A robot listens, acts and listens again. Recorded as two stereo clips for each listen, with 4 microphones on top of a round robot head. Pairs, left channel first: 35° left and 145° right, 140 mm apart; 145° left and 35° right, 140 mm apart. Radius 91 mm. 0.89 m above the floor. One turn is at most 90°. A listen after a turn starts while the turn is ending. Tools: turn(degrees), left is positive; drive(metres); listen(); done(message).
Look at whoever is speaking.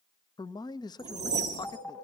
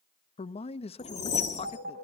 turn(degrees=90)
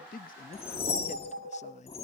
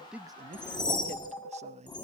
done("Facing the man speaking, under 1 m away.")